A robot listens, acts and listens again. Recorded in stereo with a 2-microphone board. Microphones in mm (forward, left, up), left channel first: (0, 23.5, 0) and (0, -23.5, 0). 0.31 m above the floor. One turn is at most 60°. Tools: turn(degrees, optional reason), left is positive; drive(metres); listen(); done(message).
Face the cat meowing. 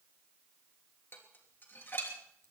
listen()
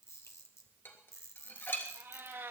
turn(degrees=-60, reason="The cat meowing: about 60° right or 120° right.")
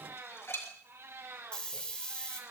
turn(degrees=-60, reason="So it is at 80° right.")
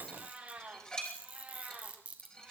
turn(degrees=-25, reason="The cat meowing is now 25° right.")
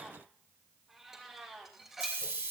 done("Found it: a cat meowing, straight ahead, over 4 m away.")